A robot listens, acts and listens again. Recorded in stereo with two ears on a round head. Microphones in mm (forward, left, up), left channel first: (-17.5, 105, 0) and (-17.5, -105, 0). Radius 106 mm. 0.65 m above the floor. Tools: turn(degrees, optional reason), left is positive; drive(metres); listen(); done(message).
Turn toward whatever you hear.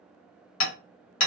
turn(degrees=65, reason="The hammering: about 65° left or 115° left.")
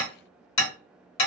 turn(degrees=45, reason="So it is at 45° left.")
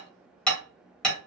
done("Facing the hammering, 1 to 2 m away.")